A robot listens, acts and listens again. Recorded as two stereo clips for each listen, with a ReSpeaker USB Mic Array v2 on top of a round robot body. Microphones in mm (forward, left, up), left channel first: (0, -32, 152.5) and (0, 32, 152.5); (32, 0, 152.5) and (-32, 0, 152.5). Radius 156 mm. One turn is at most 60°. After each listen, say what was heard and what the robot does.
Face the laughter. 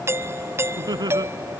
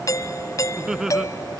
The laughter: 100° left. Turn 60° left.
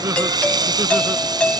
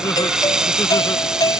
Nothing new. It was at 40° left. Turn 40° left.
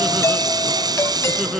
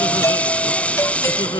Keep listening.
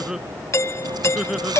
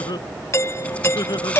Facing the laughter.